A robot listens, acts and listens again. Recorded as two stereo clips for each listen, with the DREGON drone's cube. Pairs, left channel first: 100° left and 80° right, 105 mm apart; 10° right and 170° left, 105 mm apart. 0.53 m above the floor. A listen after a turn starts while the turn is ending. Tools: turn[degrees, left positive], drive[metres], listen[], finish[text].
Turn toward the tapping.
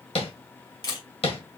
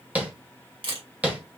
Thought: The tapping: 95° left.
Action: turn[95]
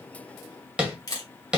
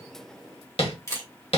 Action: finish[Facing the tapping, 1 to 2 m away.]